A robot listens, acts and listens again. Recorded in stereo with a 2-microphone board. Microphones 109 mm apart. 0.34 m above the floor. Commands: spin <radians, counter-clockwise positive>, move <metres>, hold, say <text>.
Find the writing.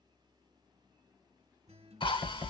spin -0.44
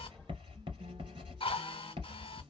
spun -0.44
spin -2.27
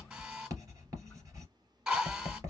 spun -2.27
spin -0.61
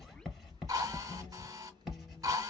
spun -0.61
say Facing the writing.